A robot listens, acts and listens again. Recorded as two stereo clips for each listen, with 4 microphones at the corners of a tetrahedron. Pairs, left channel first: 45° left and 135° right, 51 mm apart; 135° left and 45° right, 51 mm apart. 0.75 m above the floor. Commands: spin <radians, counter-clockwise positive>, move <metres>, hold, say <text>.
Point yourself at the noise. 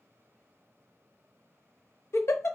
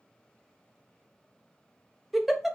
spin 0.70
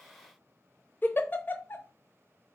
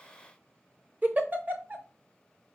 say Facing the giggle.